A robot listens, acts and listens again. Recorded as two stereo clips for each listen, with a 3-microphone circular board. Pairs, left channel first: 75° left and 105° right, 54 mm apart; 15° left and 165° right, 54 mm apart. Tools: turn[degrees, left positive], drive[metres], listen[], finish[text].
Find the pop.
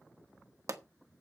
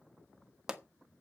Thought: The pop: 85° right.
Action: turn[-85]
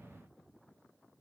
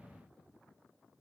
Action: finish[Facing where the pop came from. I can't hear it now.]